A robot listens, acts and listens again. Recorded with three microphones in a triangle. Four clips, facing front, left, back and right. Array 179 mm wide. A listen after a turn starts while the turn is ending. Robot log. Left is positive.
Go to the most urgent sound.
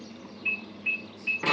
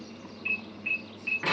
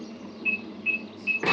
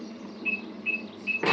note: The alarm: 75° left.
cmd yaw +75
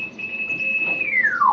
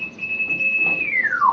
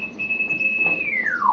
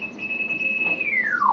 note: The alarm is now 10° right.
cmd yaw -10
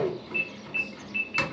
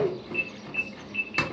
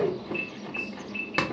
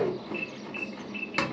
cmd fwd 1.0
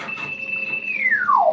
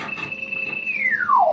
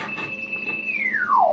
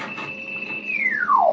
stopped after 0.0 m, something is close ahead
end: Something is in my way. I am facing the alarm but have not reached it.